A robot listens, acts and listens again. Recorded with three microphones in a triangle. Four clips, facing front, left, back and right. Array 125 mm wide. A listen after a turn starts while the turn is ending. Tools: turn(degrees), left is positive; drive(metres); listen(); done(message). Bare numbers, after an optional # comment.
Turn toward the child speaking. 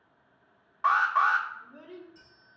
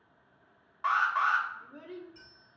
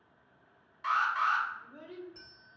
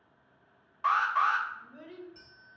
# The child speaking: 100° left.
turn(100)
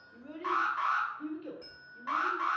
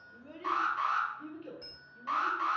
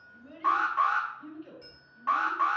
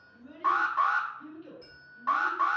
# The child speaking is now 20° left.
turn(20)
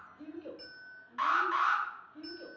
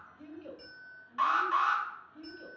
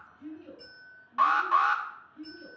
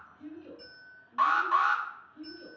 # The child speaking is now 25° left.
turn(25)
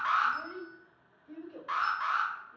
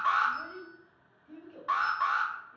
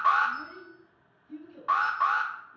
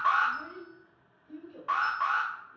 done("Facing the child speaking, 2 to 4 m away.")